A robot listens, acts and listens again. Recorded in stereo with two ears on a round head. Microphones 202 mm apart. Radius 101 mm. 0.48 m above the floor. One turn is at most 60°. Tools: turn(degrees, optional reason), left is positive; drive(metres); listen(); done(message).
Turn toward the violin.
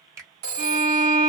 turn(degrees=-35, reason="The violin: about 35° right or 145° right.")
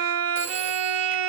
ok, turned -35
turn(degrees=-60, reason="So it is at 105° right.")
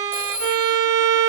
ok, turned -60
turn(degrees=-60, reason="The violin is now 70° right.")
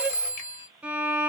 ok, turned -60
done("Found it: a violin, straight ahead.")